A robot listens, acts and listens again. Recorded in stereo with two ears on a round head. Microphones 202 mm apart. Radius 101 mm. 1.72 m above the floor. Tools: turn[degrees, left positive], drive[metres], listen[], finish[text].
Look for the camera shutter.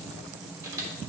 Thought: The camera shutter: about 15° right or 165° right.
Action: turn[-15]
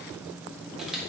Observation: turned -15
Action: finish[Found it: a camera shutter, straight ahead, 1 to 2 m away.]